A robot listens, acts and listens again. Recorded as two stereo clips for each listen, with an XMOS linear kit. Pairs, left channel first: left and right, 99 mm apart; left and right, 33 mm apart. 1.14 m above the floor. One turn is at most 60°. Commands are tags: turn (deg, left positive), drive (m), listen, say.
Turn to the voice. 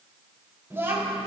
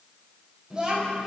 <turn deg="-25"/>
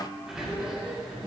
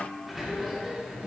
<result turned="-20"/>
<listen/>
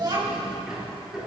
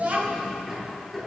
<turn deg="-60"/>
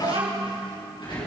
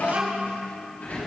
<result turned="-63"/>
<turn deg="-60"/>
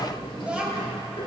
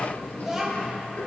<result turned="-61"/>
<turn deg="-10"/>
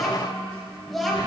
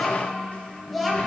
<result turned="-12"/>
<say>Facing the child speaking, over 4 m away.</say>